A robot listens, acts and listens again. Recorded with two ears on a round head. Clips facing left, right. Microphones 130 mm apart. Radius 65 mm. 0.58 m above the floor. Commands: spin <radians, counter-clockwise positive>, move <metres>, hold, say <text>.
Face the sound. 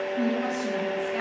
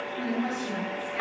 spin 1.57
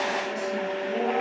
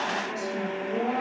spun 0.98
spin 0.52
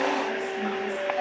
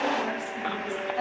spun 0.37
spin 0.17
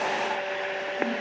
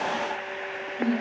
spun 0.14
say Found it: a woman speaking, straight ahead, over 4 m away.